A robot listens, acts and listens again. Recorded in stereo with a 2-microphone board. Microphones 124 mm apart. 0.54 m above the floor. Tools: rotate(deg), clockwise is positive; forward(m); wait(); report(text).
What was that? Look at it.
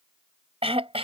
rotate(50)
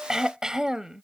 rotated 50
report("Facing the throat clearing.")